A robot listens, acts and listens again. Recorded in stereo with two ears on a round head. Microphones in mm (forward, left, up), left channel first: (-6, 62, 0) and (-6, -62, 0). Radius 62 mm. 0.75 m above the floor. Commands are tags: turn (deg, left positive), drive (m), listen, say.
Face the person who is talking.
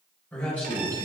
<turn deg="30"/>
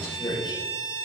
<turn deg="140"/>
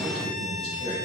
<turn deg="35"/>
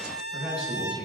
<turn deg="-10"/>
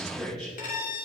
<say>Found it: a man speaking, straight ahead, over 4 m away.</say>